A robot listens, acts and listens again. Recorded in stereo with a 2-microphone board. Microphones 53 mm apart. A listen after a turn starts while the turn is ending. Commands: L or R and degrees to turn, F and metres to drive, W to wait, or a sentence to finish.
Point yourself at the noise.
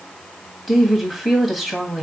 L30
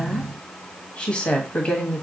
L155
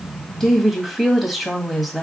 Found it: a woman speaking, straight ahead.